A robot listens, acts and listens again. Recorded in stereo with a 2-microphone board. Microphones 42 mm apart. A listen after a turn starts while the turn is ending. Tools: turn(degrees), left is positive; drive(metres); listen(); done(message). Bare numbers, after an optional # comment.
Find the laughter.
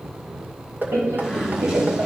# The laughter: about 70° right or 110° right.
turn(-70)
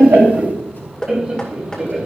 # So it is at 20° right.
turn(-20)
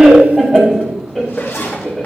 # The laughter is now 15° left.
turn(15)
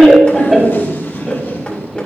done("Facing the laughter.")